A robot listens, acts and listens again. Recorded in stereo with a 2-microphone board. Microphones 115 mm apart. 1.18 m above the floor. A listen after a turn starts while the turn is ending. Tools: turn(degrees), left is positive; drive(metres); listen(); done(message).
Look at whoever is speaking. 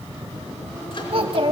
turn(degrees=-50)
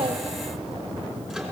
listen()
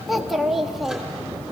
done("Facing the child speaking, 1 to 2 m away.")